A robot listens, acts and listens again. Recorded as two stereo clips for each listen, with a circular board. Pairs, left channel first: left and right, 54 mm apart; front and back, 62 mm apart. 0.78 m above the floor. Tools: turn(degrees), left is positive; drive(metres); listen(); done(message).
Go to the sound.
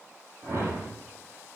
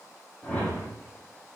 turn(degrees=-75)
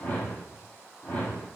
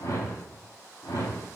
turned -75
turn(degrees=25)
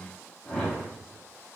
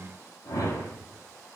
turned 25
turn(degrees=10)
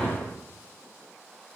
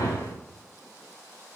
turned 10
drive(metres=1.0)
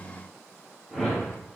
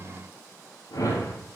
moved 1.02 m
drive(metres=1.0)
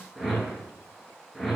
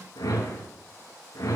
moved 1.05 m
drive(metres=1.0)
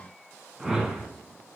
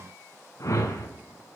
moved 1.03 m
turn(degrees=-15)
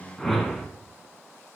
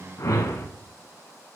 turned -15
drive(metres=1.0)
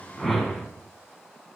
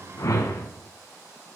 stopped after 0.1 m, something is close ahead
done("I am next to the whoosh.")